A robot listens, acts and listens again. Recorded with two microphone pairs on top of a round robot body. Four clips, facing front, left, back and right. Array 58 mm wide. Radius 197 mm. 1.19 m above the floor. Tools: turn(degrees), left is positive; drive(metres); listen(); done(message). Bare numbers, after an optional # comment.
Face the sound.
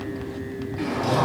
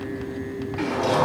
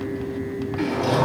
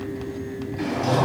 # The sliding door: 105° left.
turn(105)
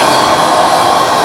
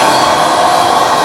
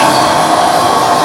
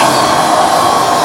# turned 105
# The sliding door is now 30° left.
turn(30)
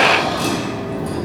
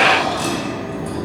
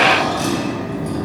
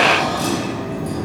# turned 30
# The sliding door is now 10° left.
turn(10)
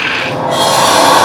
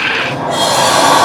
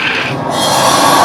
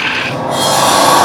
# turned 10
done("Facing the sliding door, 1 to 2 m away.")